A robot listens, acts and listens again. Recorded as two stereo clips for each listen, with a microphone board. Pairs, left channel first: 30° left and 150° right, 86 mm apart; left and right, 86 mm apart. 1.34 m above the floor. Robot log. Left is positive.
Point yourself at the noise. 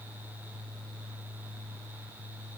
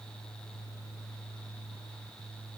cmd idle
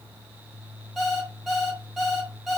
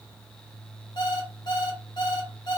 note: The alarm clock: 115° left.
cmd yaw +115
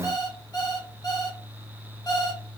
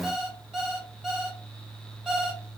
note: The alarm clock is now 10° right.
cmd yaw -10
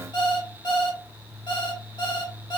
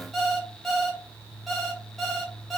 end: Facing the alarm clock.